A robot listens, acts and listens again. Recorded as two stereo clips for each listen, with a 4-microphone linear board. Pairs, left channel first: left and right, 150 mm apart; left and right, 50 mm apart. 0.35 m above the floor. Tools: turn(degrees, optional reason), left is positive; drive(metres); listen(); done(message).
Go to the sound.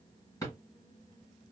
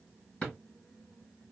turn(degrees=20, reason="The drawer: about 20° left or 160° left.")
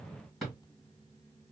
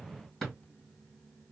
drive(metres=1.0)
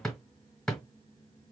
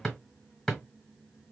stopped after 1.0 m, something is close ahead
done("Arrived at the drawer, straight ahead.")